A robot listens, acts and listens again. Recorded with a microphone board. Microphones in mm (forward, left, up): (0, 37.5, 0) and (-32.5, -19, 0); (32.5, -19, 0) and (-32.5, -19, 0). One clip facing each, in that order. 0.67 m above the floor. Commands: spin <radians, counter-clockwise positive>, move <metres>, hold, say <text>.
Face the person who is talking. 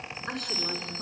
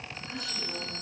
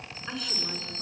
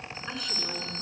spin 1.57
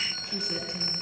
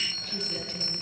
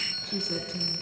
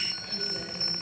spin -0.17
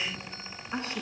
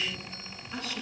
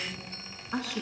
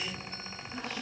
say Facing the woman speaking, over 4 m away.